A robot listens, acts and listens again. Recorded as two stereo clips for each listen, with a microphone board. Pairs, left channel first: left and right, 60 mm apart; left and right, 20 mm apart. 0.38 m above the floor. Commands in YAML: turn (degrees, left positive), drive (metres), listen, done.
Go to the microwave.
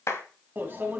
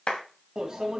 turn: -35
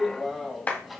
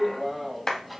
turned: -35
drive: 1.0
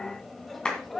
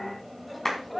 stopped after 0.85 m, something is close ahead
done: "Arrived at the microwave, straight ahead."